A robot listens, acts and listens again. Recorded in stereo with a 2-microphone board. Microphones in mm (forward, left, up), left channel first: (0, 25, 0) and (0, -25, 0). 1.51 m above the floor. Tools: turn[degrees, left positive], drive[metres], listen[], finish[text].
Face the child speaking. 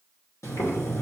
Action: listen[]
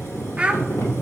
Thought: The child speaking: about 20° right or 160° right.
Action: turn[-20]
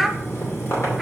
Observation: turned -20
Action: finish[Facing the child speaking, under 1 m away.]